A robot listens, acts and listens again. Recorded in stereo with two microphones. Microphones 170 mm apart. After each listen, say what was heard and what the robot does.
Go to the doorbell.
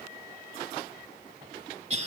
Keep listening.
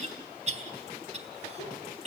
Keep listening.
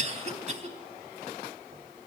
I can't make out a doorbell, only a cough.